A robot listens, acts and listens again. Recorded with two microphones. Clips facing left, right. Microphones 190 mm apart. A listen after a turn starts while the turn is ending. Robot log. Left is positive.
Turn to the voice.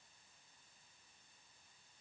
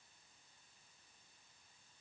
cmd idle
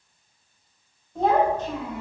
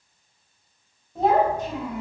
note: The child speaking: about 15° right or 165° right.
cmd yaw -15
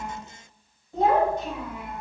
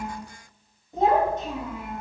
note: The child speaking: about 30° right or 150° right.
cmd yaw -30
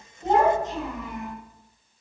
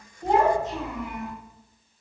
cmd yaw -30
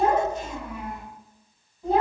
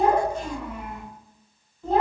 note: So it is at 10° left.
cmd yaw +10
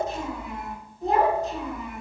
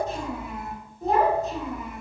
end: Facing the child speaking.